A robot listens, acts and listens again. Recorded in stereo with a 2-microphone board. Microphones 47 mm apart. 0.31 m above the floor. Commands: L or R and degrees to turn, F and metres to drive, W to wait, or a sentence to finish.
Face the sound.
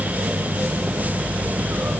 W
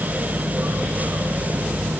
W
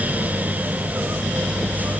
I can't make out anything to turn to.